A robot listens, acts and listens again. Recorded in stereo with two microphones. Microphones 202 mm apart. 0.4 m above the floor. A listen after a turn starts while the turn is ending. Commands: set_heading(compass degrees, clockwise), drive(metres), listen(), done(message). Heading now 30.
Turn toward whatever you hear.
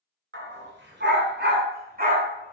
set_heading(75)
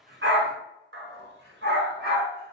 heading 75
set_heading(195)
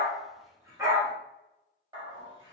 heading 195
set_heading(215)
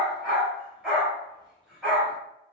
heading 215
done("Found it: a dog barking, straight ahead.")